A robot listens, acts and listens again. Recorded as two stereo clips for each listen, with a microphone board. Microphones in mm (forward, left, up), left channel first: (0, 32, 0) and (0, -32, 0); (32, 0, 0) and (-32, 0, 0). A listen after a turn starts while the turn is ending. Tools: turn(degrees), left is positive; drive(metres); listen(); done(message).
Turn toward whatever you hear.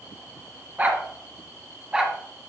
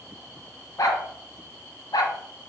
turn(degrees=-15)
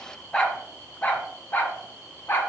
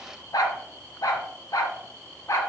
turn(degrees=40)
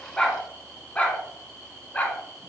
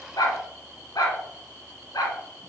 turn(degrees=25)
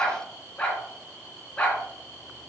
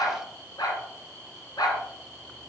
turn(degrees=20)
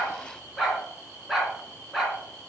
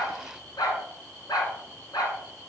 done("Facing the dog barking, 2 to 4 m away.")